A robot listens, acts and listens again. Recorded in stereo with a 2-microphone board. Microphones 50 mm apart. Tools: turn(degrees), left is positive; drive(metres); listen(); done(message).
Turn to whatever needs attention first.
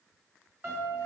listen()
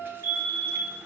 turn(degrees=-60)
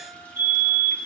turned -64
turn(degrees=-40)
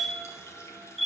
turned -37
done("Found it: a fire alarm, straight ahead, 2 to 4 m away.")